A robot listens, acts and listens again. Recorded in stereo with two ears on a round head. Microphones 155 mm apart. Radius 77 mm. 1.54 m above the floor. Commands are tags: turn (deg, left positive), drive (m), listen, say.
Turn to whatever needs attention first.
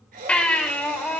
<turn deg="30"/>
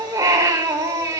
<turn deg="-20"/>
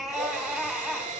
<say>Found it: a baby crying, straight ahead, 2 to 4 m away.</say>